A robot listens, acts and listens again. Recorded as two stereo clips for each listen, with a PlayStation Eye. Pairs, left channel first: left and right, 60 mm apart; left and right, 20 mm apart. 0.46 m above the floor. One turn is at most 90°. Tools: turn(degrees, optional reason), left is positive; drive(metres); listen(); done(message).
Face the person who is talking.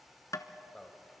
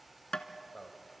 turn(degrees=30)
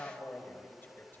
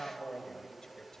turn(degrees=90, reason="So it is at 140° left.")
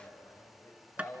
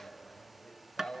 turn(degrees=70, reason="The man speaking is now 70° left.")
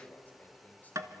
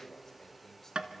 turn(degrees=35, reason="The man speaking is now 35° left.")
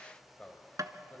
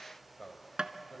turn(degrees=20, reason="The man speaking is now 20° left.")
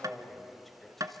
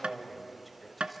done("Found it: a man speaking, straight ahead.")